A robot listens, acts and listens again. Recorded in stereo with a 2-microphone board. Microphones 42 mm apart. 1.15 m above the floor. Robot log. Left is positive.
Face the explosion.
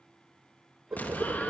note: The explosion: about 45° left or 135° left.
cmd yaw +45
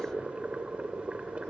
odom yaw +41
cmd idle
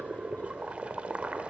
end: I heard an explosion, but can't make it out now. It was about 5° left or 95° left.